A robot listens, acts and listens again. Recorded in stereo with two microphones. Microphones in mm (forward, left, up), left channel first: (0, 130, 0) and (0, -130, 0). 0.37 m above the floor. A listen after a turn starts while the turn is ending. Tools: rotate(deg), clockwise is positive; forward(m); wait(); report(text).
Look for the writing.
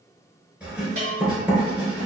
rotate(30)
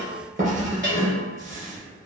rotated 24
rotate(150)
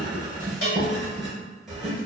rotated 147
report("Found it: writing, straight ahead.")